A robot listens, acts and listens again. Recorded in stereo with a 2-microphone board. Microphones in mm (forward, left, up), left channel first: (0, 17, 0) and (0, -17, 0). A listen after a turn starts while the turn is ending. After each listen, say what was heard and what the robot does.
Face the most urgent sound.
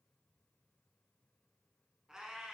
Keep listening.
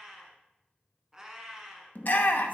The shout: about 55° left or 125° left. Turn 55° left.
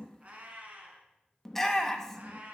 So it is at 10° left. Turn 10° left.
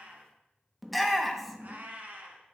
Found it: a shout, straight ahead, under 1 m away.